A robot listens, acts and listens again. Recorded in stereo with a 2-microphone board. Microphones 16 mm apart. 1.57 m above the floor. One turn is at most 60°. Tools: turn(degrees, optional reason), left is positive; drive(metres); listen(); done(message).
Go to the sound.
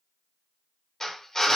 turn(degrees=25, reason="The drill: about 25° left or 155° left.")
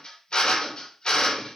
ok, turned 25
turn(degrees=60, reason="So it is at 130° left.")
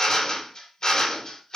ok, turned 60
turn(degrees=50, reason="The drill is now 50° left.")
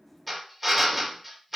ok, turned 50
drive(metres=1.0)
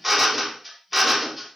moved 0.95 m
drive(metres=1.0)
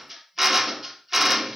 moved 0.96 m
drive(metres=1.0)
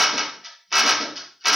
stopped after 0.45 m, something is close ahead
done("I am next to the drill.")